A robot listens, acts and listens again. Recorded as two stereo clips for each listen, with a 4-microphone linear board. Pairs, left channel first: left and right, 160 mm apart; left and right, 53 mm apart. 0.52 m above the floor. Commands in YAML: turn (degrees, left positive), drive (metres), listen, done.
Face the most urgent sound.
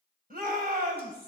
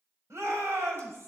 turn: -65
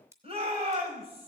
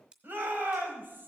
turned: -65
turn: -40
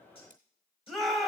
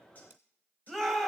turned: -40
done: "Found it: a shout, straight ahead, 2 to 4 m away."